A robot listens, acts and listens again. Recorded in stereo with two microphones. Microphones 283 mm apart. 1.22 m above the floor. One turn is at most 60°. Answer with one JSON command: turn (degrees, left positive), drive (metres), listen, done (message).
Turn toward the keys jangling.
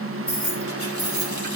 {"turn": 50}
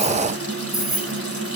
{"done": "Facing the keys jangling."}